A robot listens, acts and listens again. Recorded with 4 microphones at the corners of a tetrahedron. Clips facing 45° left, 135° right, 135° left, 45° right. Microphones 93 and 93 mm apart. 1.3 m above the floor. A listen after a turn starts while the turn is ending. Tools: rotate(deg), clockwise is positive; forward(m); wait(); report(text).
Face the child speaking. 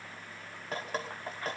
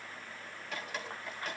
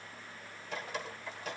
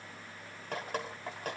wait()
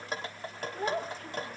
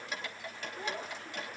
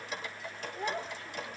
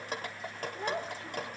rotate(-20)
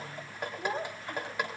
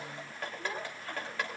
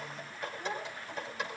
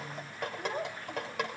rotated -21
rotate(10)
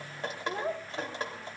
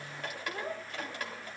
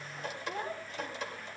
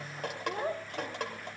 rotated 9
rotate(10)
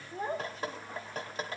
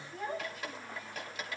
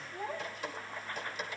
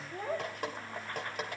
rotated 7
rotate(10)
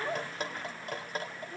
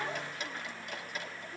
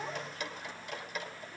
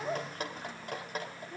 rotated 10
report("Facing the child speaking.")